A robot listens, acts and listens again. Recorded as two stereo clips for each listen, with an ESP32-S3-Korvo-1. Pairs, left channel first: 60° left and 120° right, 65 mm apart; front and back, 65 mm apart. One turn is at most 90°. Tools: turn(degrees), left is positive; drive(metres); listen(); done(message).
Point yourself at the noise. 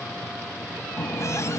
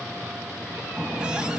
turn(degrees=90)
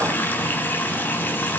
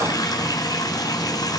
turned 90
done("Found it: a running tap, straight ahead, 2 to 4 m away.")